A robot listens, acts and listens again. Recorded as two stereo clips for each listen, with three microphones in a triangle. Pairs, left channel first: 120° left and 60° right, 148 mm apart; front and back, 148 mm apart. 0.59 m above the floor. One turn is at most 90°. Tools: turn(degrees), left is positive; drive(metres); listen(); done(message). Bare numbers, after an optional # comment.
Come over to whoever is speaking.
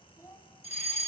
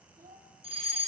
# The child speaking: 170° right.
turn(-90)
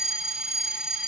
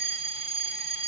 # Nothing new. It was at 80° right.
turn(-80)
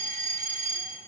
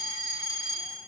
listen()
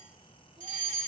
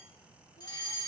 done("Facing where the child speaking came from. I can't hear it now. I did not reach it.")